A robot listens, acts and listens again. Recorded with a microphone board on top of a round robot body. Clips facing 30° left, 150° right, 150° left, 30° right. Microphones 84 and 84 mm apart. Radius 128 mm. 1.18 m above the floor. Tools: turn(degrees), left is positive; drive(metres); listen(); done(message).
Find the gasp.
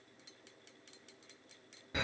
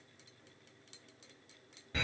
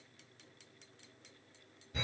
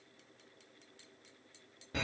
listen()
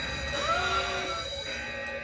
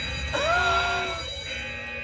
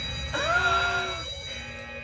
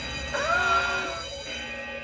turn(degrees=-115)
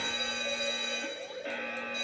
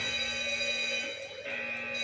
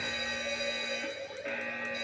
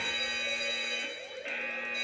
done("Facing where the gasp came from. I can't hear it now.")